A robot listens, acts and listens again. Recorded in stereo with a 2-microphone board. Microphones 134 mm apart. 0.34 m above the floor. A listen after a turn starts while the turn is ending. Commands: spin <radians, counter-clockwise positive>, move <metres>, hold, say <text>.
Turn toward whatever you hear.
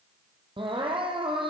spin -0.70
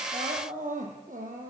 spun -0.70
spin -1.75
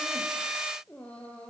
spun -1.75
spin 0.17
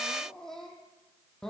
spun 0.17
say Facing the crying, 2 to 4 m away.